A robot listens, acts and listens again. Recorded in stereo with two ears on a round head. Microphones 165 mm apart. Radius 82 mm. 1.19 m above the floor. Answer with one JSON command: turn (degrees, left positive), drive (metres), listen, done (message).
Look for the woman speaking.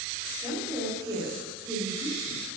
{"turn": -20}
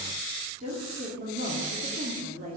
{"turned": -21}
{"turn": -130}
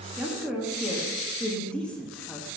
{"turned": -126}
{"done": "Facing the woman speaking."}